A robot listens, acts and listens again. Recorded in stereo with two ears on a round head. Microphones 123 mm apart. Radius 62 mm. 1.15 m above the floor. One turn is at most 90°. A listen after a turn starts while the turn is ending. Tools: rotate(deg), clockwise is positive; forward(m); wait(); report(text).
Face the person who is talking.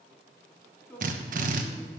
rotate(-30)
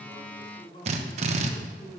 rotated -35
rotate(-90)
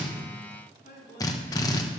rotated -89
rotate(-70)
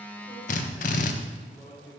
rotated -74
report("Facing the man speaking, over 4 m away.")